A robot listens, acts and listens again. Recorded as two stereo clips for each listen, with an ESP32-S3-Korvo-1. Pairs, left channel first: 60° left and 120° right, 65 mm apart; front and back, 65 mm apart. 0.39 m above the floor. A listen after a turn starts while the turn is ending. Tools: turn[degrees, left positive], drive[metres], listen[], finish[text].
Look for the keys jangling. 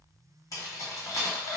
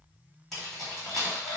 Thought: The keys jangling: 85° left.
Action: turn[85]
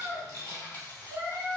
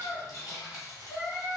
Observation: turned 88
Action: finish[Facing the keys jangling, 1 to 2 m away.]